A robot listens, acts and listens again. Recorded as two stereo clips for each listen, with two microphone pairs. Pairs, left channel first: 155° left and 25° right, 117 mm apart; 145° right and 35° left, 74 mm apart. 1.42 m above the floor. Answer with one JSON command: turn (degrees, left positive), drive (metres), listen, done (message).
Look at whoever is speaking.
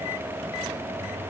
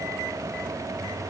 {"listen": true}
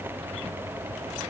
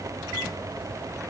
{"listen": true}
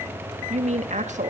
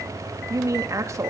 {"turn": -15}
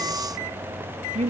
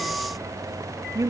{"done": "Facing the woman speaking, 2 to 4 m away."}